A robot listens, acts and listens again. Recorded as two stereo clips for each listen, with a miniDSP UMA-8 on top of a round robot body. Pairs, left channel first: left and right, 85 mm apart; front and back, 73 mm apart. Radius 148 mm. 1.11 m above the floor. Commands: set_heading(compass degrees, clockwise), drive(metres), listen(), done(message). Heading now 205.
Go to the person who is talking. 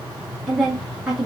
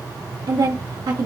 set_heading(20)
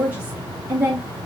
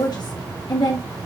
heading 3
set_heading(23)
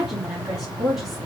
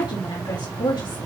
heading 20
drive(1.0)
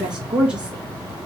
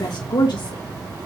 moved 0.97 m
set_heading(30)
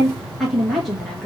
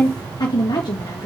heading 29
drive(1.0)
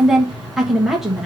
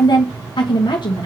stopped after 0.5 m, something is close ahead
done("I am next to the woman speaking.")